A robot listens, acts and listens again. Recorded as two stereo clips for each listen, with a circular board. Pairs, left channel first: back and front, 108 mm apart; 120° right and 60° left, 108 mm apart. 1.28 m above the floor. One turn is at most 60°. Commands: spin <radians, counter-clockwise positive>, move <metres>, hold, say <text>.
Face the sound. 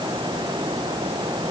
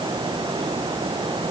hold
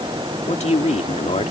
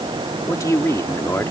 spin 1.05
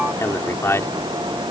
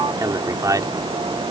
spin 1.05
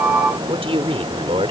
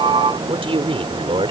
spin 0.52
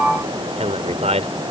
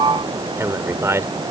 say Found it: a man speaking, straight ahead.